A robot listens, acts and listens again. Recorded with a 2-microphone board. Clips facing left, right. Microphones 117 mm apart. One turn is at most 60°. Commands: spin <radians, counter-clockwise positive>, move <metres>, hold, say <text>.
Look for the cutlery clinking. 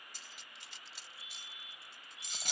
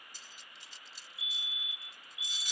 spin 1.05
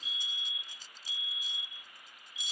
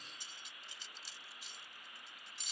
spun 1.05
hold
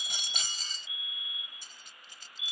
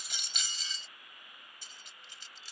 spin 0.87
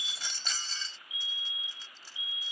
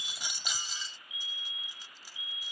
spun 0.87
spin -0.26
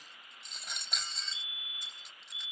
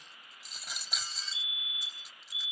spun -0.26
say Facing the cutlery clinking.